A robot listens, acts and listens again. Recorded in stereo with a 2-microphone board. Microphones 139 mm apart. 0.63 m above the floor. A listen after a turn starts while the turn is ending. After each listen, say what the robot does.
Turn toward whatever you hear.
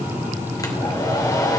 Turn 25° left.
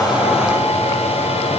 Turn 125° left.
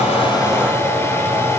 Turn 20° left.
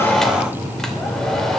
Facing the hair dryer.